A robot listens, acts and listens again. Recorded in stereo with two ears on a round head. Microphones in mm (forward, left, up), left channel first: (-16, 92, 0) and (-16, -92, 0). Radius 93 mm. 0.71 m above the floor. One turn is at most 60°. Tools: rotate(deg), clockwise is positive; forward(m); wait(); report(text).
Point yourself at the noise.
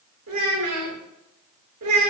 rotate(60)
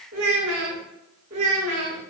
rotate(35)
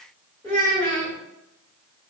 rotate(-10)
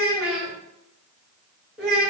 report("Found it: a child speaking, straight ahead.")